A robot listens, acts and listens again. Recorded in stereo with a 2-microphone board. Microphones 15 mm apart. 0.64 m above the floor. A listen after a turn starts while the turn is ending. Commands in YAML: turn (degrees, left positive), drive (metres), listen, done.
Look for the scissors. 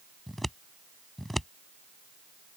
turn: 15
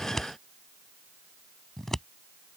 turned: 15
turn: 150
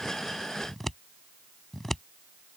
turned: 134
turn: 15
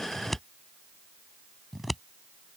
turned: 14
done: "Facing the scissors."